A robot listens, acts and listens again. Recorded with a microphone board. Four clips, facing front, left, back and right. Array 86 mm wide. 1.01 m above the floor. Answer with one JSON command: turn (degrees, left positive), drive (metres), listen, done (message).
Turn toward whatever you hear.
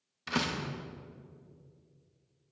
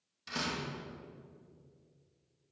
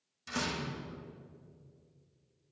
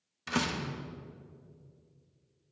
{"turn": -45}
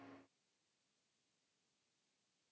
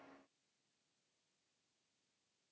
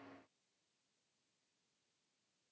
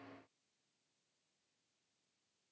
{"done": "Facing where the door slam came from. I can't hear it now."}